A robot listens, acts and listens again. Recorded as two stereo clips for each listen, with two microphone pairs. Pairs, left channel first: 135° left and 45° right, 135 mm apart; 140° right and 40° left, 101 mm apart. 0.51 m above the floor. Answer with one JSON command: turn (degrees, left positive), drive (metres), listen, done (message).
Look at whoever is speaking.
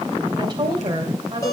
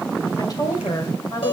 {"turn": -95}
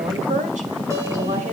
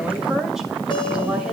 {"turn": -45}
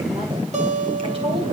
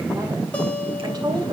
{"listen": true}
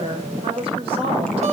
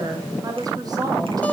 {"done": "Facing the woman speaking, 2 to 4 m away."}